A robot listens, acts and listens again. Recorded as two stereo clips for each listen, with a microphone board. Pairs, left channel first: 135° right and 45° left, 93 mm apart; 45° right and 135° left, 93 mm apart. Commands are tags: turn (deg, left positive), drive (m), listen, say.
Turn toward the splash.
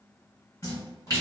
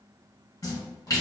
<turn deg="-85"/>
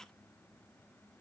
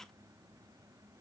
<say>Facing where the splash came from. I can't hear it now.</say>